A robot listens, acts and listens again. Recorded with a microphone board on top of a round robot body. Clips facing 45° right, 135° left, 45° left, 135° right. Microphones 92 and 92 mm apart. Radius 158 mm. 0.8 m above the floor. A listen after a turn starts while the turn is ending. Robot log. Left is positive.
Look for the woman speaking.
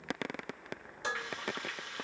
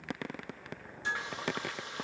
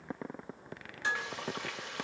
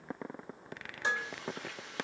cmd idle
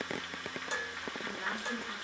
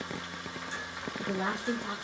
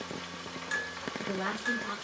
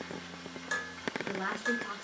note: The woman speaking: 135° left.
cmd yaw +135
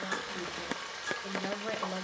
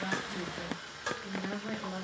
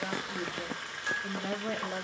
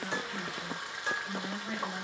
end: Facing the woman speaking, 2 to 4 m away.